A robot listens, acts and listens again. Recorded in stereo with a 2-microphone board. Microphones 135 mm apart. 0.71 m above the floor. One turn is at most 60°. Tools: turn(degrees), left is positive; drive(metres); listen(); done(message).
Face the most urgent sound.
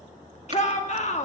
turn(degrees=55)
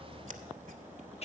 turn(degrees=55)
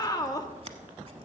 turn(degrees=30)
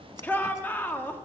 turn(degrees=15)
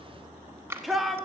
done("Found it: a shout, straight ahead.")